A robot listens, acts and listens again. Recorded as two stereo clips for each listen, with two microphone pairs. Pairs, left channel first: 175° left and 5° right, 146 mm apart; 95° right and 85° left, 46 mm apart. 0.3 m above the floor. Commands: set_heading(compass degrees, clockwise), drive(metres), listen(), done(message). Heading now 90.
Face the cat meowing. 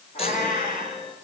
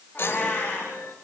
set_heading(260)
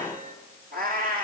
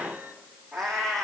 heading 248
set_heading(258)
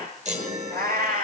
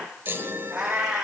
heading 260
done("Facing the cat meowing, over 4 m away.")